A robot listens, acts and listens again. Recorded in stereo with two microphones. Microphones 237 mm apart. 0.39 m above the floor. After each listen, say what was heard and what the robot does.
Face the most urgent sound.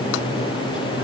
Keep listening.
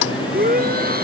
The shout: about 40° right or 140° right. Turn 40° right.
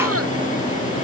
Keep listening.
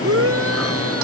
So it is at 100° right. Turn 100° right.
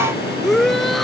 Found it: a shout, straight ahead.